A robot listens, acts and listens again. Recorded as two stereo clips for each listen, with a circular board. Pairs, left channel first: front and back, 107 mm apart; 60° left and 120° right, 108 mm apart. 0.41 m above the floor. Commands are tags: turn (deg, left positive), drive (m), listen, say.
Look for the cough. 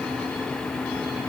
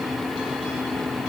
<listen/>
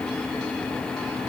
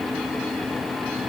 <listen/>
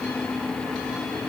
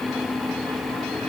<say>I can't make out a cough to turn to.</say>